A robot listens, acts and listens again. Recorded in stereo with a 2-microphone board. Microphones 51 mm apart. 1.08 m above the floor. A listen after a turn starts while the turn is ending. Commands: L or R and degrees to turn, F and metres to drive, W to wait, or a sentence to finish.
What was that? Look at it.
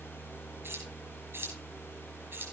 R50
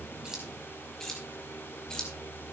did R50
L15
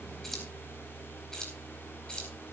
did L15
L20
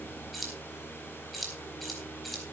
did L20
Facing the keys jangling.